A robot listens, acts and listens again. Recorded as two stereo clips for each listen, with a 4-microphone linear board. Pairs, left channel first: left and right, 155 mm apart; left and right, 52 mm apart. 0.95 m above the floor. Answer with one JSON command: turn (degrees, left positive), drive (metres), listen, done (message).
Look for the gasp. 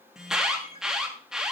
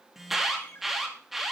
{"listen": true}
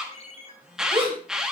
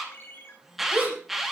{"turn": -35}
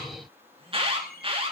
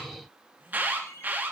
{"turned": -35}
{"listen": true}
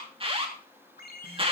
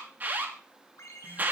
{"done": "I heard a gasp, but can't make it out now. It was about straight ahead or 110° right."}